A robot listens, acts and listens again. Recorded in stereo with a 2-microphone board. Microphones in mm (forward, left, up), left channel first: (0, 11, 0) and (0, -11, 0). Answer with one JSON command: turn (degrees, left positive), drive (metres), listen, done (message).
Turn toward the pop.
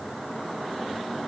{"listen": true}
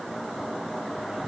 {"listen": true}
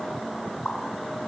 {"turn": 50}
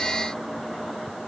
{"listen": true}
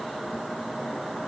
{"done": "I heard a pop, but can't make it out now. It was about straight ahead or 80° left."}